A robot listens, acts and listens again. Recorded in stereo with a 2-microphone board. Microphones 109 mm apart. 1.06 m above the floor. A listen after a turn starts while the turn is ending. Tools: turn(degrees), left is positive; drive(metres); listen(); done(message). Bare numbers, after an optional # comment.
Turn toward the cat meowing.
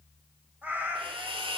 # The cat meowing: about 15° right or 165° right.
turn(-15)
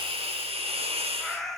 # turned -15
done("Facing the cat meowing, 2 to 4 m away.")